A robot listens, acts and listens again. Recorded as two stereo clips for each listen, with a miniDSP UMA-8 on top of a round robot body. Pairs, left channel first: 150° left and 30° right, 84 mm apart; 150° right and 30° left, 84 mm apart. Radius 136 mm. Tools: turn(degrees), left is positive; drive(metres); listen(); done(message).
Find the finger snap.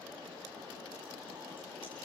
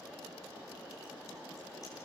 listen()
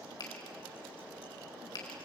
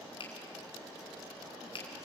turn(degrees=-170)
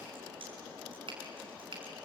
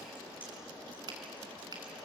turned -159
turn(degrees=-10)
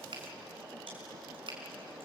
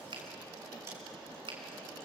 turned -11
done("Found it: a finger snap, straight ahead.")